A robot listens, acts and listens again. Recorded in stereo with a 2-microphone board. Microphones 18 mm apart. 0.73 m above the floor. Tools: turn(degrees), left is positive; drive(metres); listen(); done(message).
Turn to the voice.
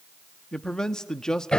turn(degrees=40)
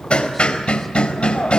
listen()
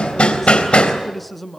turn(degrees=10)
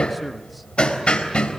listen()
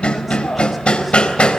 listen()
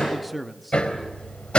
done("Facing the man speaking, under 1 m away.")